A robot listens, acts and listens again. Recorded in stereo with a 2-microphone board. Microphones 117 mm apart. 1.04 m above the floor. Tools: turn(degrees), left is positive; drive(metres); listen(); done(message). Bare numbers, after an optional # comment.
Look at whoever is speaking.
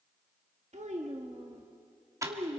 turn(-90)
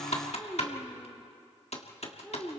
done("Found it: a child speaking, straight ahead, 1 to 2 m away.")